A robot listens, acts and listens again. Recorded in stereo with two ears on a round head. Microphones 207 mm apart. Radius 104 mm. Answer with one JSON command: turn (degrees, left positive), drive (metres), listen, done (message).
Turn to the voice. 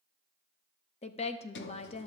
{"turn": 30}
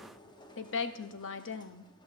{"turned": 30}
{"turn": 120}
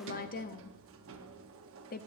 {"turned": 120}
{"turn": 40}
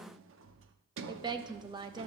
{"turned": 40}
{"turn": -20}
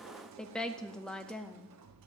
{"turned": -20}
{"done": "Found it: a woman speaking, straight ahead, under 1 m away."}